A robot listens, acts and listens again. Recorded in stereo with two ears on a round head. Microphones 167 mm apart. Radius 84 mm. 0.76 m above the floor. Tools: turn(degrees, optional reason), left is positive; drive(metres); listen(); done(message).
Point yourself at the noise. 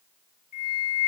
turn(degrees=45, reason="The flute: about 45° left or 135° left.")
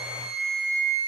done("Found it: a flute, straight ahead.")